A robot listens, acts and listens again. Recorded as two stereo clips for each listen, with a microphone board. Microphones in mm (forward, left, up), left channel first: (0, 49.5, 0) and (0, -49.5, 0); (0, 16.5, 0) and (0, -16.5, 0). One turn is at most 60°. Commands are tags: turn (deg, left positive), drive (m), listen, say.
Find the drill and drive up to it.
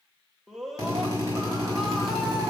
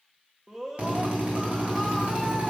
<turn deg="-35"/>
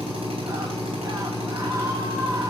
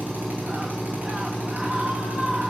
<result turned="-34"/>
<turn deg="-60"/>
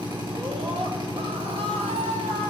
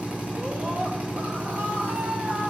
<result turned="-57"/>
<turn deg="-55"/>
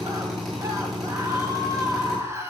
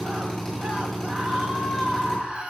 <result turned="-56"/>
<drive m="1.0"/>
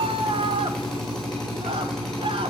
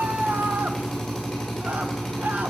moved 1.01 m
<drive m="1.0"/>
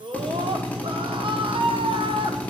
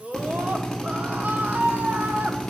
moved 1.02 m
<turn deg="15"/>
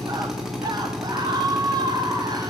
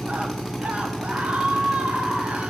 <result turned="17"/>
<drive m="1.0"/>
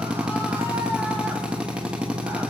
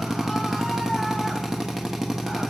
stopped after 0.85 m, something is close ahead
<turn deg="-10"/>
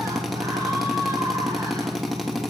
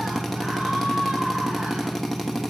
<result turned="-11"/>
<say>I am next to the drill.</say>